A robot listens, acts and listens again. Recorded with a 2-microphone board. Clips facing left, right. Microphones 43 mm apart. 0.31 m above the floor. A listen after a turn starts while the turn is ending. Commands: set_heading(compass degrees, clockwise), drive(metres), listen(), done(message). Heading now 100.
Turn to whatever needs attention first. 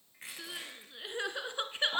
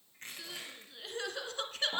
set_heading(75)
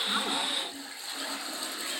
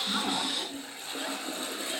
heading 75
listen()
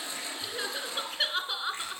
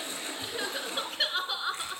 done("Found it: crying, straight ahead, 1 to 2 m away.")